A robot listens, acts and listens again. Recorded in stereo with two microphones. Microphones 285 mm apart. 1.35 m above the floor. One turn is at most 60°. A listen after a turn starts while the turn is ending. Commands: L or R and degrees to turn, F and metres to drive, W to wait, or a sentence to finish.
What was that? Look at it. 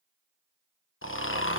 L45
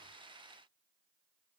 W
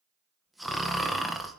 Found it: snoring, straight ahead.